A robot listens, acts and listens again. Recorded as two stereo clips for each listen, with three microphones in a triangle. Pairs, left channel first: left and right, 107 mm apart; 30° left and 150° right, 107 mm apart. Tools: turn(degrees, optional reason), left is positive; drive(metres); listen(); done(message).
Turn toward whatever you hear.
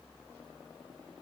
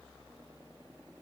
listen()
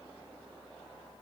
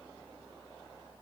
listen()
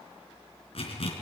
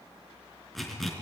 turn(degrees=120, reason="The zipper: 120° left.")
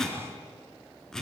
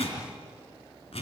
done("Found it: a zipper, straight ahead, 2 to 4 m away.")